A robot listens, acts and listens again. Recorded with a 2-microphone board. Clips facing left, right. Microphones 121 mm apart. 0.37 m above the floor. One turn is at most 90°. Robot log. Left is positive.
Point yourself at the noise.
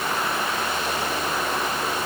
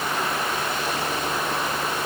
cmd idle
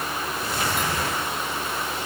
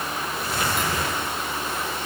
cmd idle
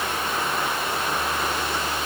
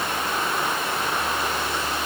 end: I can't make out anything to turn to.